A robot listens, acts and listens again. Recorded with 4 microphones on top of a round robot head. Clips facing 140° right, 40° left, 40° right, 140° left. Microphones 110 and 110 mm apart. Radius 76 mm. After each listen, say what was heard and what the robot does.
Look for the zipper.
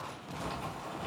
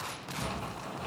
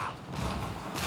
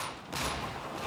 Found it: a zipper, straight ahead.